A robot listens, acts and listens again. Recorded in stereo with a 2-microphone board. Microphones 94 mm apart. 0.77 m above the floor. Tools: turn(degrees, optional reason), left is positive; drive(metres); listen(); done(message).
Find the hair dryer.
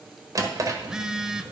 listen()
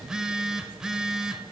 listen()
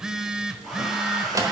turn(degrees=-30)
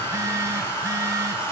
turn(degrees=25, reason="So it is at 25° left.")
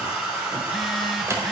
turn(degrees=-15, reason="The hair dryer is now 15° right.")
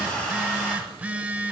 done("Found it: a hair dryer, straight ahead.")